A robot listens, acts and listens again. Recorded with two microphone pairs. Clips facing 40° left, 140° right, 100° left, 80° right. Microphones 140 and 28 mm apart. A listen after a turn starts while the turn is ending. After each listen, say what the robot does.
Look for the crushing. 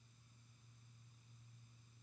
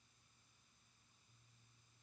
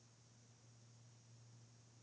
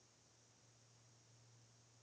Keep listening.
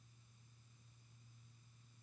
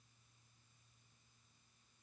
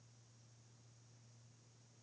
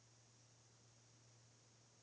Keep listening.
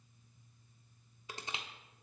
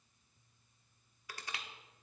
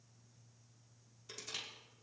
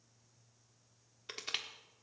Turn 30° right.
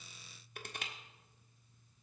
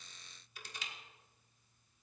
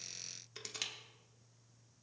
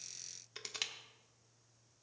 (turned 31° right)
Found it: crushing, straight ahead.